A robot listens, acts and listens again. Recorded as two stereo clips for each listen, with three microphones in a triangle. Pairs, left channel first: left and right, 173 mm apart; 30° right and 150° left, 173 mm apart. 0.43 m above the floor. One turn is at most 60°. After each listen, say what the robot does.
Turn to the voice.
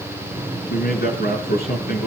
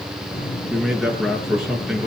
Turn 60° left.
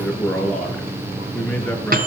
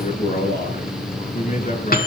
Turn 10° left.
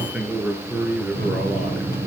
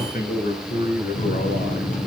Found it: a man speaking, straight ahead.